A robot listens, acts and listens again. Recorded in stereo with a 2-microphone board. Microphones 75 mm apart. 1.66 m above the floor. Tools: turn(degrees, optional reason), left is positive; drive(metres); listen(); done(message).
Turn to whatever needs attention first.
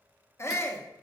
turn(degrees=40, reason="The shout: about 40° left or 140° left.")
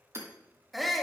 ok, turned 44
done("Facing the shout.")